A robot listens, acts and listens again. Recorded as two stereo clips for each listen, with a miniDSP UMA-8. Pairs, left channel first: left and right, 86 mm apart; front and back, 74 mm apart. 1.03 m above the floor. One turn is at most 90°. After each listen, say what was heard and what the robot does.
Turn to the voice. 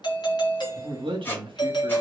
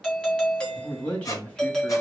The man speaking: 75° right. Turn 75° right.
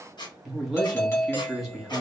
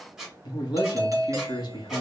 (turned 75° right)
Found it: a man speaking, straight ahead.